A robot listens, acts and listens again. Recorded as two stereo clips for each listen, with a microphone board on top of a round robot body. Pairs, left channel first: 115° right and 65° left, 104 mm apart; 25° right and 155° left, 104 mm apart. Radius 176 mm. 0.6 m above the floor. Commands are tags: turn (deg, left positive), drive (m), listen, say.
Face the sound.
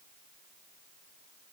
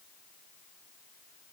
<listen/>
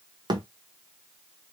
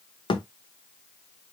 <turn deg="20"/>
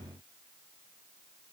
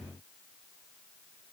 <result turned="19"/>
<say>Facing where the thud came from. I can't hear it now.</say>